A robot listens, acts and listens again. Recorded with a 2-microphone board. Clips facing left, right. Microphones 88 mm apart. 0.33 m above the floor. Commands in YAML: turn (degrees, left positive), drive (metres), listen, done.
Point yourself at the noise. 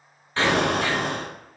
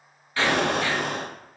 turn: 30
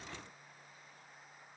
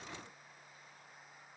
listen: true
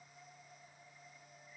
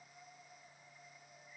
done: "I heard an explosion, but can't make it out now. It was about straight ahead or 120° left."